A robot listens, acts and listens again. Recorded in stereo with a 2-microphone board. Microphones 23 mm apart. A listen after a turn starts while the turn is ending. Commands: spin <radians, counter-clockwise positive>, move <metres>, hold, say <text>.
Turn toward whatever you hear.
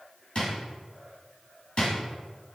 spin 0.96
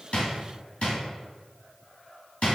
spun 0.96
spin 1.13
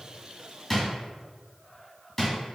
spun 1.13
say Found it: a drawer, straight ahead, 1 to 2 m away.